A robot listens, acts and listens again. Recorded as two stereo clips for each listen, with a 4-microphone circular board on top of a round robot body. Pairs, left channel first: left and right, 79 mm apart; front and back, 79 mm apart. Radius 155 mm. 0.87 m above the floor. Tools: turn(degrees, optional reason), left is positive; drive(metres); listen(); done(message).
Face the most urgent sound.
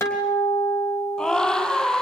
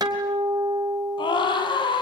turn(degrees=10, reason="The scream: 10° left.")
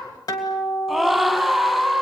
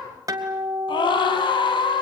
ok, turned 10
done("Facing the scream, over 4 m away.")